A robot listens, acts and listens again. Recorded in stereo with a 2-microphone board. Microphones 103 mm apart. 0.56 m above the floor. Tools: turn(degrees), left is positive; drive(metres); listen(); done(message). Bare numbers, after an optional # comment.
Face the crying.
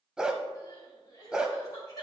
# The crying: about 35° left or 145° left.
turn(35)
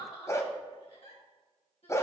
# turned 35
# So it is at 110° left.
turn(110)
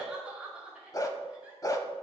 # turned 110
# The crying is now 10° right.
turn(-10)
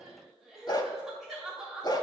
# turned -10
done("Found it: crying, straight ahead.")